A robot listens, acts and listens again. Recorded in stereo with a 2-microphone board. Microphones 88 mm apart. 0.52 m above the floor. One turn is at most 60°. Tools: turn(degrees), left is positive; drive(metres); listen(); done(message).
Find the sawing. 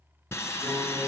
turn(degrees=30)
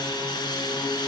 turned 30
turn(degrees=60)
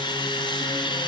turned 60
turn(degrees=60)
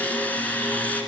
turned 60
turn(degrees=20)
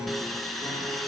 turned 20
done("Facing the sawing.")